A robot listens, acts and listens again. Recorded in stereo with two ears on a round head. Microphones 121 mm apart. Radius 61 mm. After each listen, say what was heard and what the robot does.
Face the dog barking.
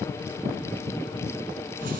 Keep listening.
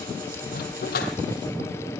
The dog barking: about 70° left or 110° left. Turn 70° left.
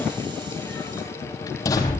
So it is at 25° left. Turn 25° left.
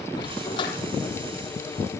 The dog barking is now 35° left. Turn 35° left.
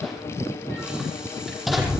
Facing the dog barking, over 4 m away.